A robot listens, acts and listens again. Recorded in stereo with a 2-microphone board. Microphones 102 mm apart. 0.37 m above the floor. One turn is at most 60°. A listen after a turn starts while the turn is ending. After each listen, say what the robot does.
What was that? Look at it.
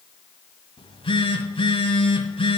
Turn 60° left.
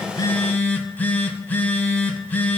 Turn 20° left.
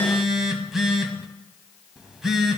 Found it: a phone buzzing, straight ahead, 1 to 2 m away.